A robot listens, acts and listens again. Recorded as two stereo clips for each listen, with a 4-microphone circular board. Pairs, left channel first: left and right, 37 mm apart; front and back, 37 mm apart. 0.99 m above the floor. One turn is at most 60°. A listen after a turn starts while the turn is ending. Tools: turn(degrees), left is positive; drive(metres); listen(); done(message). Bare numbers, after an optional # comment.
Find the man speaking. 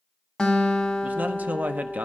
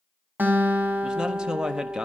# The man speaking: 115° right.
turn(-60)
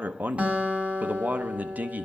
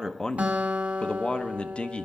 # The man speaking is now 55° right.
turn(-55)
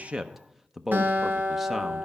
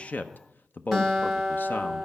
done("Facing the man speaking, under 1 m away.")